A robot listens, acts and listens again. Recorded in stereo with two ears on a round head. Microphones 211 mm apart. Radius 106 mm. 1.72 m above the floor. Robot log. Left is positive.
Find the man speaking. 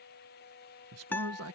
note: The man speaking: about 65° right or 115° right.
cmd yaw -65
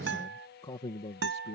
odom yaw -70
note: So it is at 25° left.
cmd yaw +25
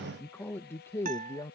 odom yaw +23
note: The man speaking is now 15° left.
cmd yaw +15
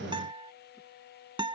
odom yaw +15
cmd idle
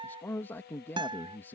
note: The man speaking is now 10° left.
cmd yaw +10
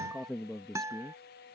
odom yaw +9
end: Found it: a man speaking, straight ahead.